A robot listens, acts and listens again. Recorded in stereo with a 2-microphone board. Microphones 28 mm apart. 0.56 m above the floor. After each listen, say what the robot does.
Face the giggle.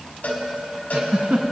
Turn 65° right.
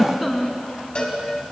Facing the giggle, 1 to 2 m away.